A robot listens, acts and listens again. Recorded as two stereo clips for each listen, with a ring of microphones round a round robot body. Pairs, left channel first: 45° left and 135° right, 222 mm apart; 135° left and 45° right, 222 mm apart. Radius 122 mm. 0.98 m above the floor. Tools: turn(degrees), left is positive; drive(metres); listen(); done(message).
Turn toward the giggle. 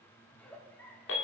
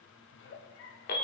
turn(degrees=130)
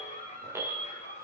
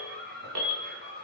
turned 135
turn(degrees=-10)
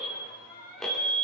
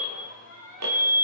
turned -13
done("Facing the giggle, 1 to 2 m away.")